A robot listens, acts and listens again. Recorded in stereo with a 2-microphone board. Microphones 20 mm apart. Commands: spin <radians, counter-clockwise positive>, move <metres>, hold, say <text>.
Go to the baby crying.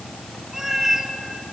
hold
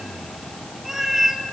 hold
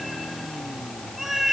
say I can't make out a baby crying, only a cat meowing.